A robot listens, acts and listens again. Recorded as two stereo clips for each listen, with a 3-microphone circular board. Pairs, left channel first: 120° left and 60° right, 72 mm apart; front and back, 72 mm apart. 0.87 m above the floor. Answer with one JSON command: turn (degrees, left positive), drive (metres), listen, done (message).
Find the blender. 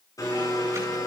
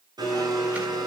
{"turn": 155}
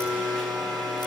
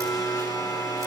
{"turn": 35}
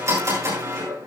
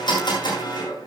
{"turn": -10}
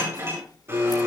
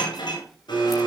{"done": "Found it: a blender, straight ahead, over 4 m away."}